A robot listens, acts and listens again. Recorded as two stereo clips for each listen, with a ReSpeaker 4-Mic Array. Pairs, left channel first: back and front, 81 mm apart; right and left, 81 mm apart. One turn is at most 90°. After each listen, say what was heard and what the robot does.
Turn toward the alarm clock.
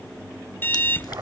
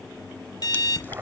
The alarm clock: 120° right. Turn 90° right.
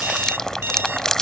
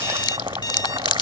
The alarm clock is now 60° right. Turn 60° right.
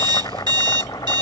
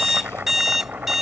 Facing the alarm clock.